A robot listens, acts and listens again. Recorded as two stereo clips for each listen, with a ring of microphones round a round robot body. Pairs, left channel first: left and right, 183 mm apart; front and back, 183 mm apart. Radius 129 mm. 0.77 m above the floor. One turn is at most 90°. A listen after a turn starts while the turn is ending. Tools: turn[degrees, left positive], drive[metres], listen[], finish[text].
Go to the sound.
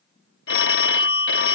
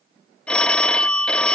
Thought: The phone ringing: 85° left.
Action: turn[85]
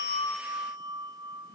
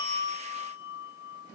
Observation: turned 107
Thought: Nothing new. It was at 20° right.
Action: turn[-20]
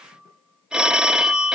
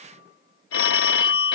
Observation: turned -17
Action: drive[1.0]
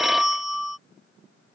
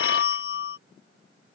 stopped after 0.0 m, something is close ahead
Action: finish[Something is in my way. I am facing the phone ringing but have not reached it.]